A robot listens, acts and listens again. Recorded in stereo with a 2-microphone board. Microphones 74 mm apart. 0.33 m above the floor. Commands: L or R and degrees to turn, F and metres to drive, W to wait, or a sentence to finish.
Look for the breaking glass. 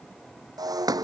R60
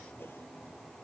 W
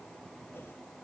I heard breaking glass, but can't make it out now. It was about straight ahead or 60° right.